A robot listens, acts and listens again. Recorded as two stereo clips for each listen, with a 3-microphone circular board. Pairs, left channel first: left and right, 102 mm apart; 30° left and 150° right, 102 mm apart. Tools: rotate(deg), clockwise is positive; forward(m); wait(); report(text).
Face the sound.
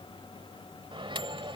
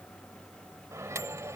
rotate(95)
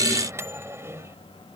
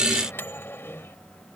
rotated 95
rotate(30)
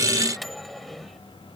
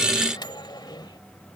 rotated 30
report("Facing the microwave.")